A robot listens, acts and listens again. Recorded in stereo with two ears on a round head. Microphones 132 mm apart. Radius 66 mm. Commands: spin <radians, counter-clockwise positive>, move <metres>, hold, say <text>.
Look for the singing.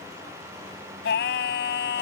spin 1.57
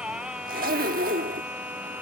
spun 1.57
spin -0.17
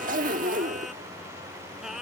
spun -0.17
say Found it: singing, straight ahead.